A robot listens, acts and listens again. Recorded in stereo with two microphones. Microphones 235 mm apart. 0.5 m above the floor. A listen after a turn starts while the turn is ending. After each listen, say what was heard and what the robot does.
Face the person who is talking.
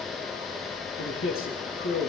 The man speaking: about 65° left or 115° left. Turn 65° left.
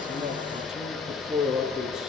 Facing the man speaking.